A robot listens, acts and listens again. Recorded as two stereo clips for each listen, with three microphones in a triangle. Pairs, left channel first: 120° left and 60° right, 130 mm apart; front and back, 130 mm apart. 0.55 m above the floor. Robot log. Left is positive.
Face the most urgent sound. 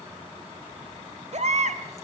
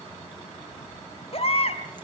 note: The baby crying: 35° right.
cmd yaw -35
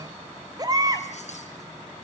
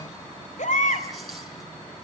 end: Facing the baby crying, 2 to 4 m away.